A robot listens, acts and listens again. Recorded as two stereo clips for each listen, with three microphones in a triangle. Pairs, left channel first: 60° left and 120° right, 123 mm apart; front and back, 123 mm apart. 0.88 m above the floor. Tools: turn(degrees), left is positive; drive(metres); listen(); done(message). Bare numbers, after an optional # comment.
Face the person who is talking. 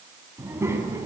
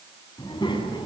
# The child speaking: 50° right.
turn(-50)
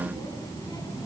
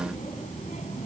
done("Facing the child speaking.")